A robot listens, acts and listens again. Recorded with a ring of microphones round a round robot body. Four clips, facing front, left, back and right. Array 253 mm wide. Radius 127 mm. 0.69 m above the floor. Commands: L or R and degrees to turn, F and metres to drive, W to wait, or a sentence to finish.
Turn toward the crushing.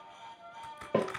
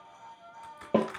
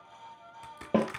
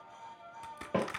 R135
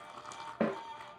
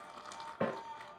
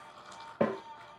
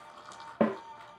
L15
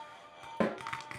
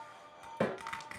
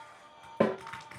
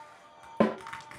Found it: crushing, straight ahead, 2 to 4 m away.